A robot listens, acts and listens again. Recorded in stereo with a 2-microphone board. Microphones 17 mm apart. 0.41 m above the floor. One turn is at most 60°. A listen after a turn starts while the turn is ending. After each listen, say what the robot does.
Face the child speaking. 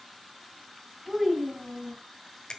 Turn 30° right.
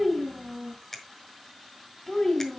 Turn 20° left.
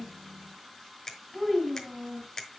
Turn 10° left.
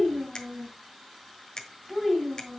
Facing the child speaking.